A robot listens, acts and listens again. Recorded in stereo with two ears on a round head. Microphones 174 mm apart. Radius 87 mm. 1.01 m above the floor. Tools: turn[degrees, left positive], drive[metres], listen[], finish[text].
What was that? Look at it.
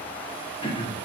Thought: The throat clearing: about 25° left or 155° left.
Action: turn[25]
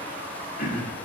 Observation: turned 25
Thought: So it is at 125° left.
Action: turn[125]
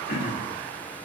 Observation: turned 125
Thought: The throat clearing is now 55° left.
Action: turn[55]
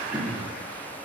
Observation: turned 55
Action: finish[Facing the throat clearing.]